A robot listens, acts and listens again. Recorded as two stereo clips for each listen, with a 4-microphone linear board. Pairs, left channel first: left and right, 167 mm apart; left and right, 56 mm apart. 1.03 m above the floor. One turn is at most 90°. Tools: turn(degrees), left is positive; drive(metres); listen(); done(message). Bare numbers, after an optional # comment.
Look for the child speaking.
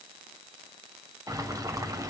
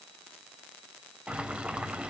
listen()
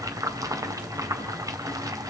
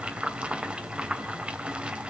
listen()
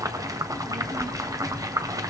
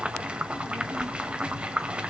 # The child speaking: about 25° right or 155° right.
turn(-25)
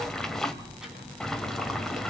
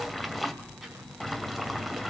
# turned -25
done("Facing the child speaking, over 4 m away.")